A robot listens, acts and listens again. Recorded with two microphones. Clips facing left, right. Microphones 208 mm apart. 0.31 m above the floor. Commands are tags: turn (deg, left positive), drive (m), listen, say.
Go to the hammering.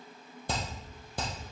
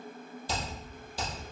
<turn deg="55"/>
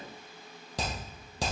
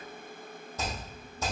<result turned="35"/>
<turn deg="90"/>
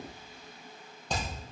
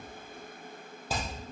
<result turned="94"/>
<drive m="1.0"/>
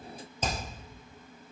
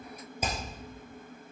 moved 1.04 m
<turn deg="-10"/>
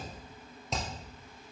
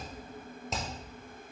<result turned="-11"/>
<drive m="1.0"/>
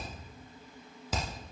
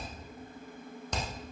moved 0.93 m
<drive m="1.0"/>
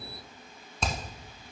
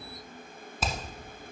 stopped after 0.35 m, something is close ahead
<say>I am next to the hammering.</say>